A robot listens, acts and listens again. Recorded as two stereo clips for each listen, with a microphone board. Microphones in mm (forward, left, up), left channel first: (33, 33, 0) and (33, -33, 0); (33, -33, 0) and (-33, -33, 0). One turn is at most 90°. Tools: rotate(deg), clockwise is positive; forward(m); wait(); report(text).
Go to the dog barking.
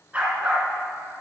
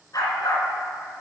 rotate(20)
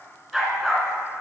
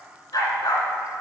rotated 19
forward(1.0)
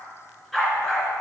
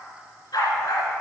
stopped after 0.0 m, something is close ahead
rotate(-10)
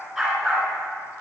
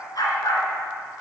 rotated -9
report("Something is in my way. I am facing the dog barking but have not reached it.")